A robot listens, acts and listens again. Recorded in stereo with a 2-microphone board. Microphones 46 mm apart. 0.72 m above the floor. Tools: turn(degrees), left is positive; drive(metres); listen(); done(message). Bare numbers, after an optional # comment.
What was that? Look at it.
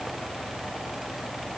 listen()
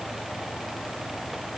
listen()
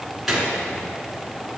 turn(-30)
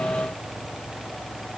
listen()
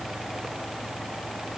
done("I heard a gunshot, but can't make it out now. It was about 25° left or 145° right.")